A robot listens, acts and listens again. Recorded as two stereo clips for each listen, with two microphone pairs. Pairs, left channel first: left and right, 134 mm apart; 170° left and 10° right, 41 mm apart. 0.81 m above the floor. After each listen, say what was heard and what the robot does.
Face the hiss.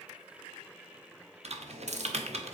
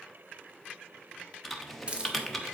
The hiss: 70° right. Turn 70° right.
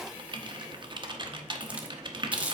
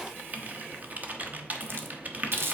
The hiss is now 15° right. Turn 15° right.
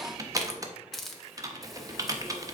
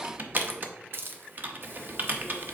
Found it: a hiss, straight ahead.